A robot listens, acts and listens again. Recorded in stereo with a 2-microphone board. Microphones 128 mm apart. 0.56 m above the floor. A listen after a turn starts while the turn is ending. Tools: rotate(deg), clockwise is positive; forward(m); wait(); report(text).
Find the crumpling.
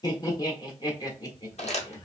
rotate(-60)
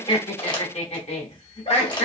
rotate(-40)
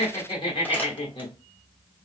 wait()
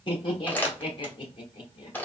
rotate(-15)
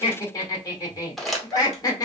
report("Facing the crumpling.")